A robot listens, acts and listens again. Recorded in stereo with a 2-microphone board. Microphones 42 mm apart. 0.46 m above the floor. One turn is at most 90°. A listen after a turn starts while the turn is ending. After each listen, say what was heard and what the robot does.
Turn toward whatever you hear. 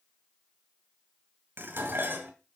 The dishes clattering: about 60° right or 120° right. Turn 60° right.
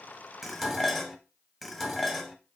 Facing the dishes clattering, 1 to 2 m away.